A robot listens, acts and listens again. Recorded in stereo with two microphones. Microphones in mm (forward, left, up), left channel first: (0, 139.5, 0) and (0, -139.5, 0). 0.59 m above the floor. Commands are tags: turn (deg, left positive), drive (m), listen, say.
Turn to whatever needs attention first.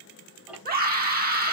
<turn deg="-30"/>
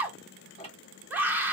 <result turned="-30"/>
<say>Facing the scream.</say>